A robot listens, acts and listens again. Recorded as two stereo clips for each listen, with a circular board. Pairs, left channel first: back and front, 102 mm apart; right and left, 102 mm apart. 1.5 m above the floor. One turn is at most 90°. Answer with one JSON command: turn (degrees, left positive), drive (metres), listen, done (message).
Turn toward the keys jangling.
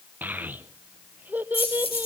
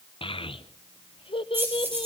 {"turn": 90}
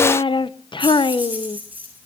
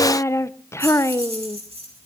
{"turn": 65}
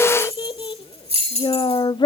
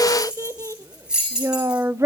{"done": "Facing the keys jangling."}